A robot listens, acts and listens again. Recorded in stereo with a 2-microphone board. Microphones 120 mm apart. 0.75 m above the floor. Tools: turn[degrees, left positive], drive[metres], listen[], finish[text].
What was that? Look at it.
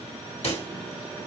Thought: The pop: about 60° left or 120° left.
Action: turn[60]
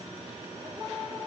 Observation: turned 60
Action: listen[]
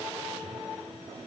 Action: finish[I heard a pop, but can't make it out now. It was about straight ahead or 60° left.]